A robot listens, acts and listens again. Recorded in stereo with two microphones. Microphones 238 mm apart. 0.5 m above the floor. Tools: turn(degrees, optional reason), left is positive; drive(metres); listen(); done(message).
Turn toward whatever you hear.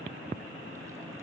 listen()
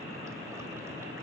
listen()
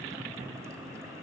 done("I can't make out anything.")